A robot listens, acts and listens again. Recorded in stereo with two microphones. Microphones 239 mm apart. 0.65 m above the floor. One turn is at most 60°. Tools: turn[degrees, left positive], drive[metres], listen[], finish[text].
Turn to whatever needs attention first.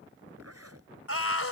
Thought: The scream: about 70° left or 110° left.
Action: turn[60]
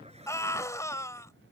Thought: So it is at 15° left.
Action: turn[15]
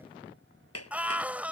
Action: finish[Facing the scream.]